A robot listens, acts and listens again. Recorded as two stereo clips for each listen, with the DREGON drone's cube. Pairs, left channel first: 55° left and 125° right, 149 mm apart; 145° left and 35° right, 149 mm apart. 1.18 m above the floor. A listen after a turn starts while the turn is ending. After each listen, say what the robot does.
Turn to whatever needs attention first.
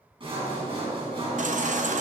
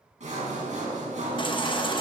Turn 160° right.
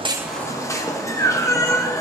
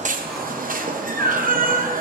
Turn 15° right.
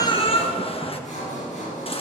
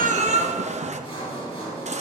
Facing the baby crying.